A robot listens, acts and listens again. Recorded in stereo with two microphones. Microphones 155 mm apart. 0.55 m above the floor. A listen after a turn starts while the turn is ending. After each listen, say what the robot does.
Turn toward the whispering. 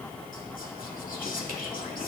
Turn 65° left.
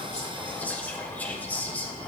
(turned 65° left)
Turn 10° left.
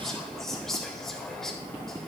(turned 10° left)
Facing the whispering.